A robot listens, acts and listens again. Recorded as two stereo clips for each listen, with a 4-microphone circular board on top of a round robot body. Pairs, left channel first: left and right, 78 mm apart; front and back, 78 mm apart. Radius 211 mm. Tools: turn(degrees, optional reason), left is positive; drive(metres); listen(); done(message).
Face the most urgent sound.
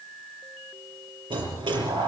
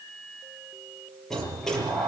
listen()
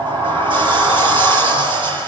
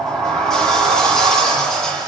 listen()
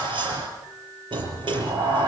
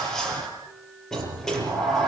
done("I can't make out anything urgent, only a sliding door.")